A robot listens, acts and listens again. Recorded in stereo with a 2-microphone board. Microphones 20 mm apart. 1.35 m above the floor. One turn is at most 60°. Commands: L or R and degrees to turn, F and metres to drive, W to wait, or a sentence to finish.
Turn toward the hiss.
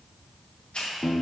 L60
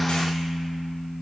W
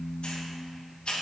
L55
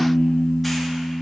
W
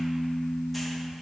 W
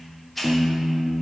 Found it: a hiss, straight ahead, 1 to 2 m away.